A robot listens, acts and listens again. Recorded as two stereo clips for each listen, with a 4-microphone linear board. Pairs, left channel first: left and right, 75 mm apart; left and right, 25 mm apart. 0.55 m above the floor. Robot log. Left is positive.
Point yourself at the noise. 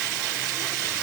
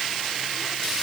cmd idle
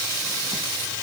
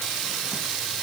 cmd idle
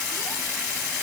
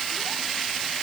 end: I can't make out anything.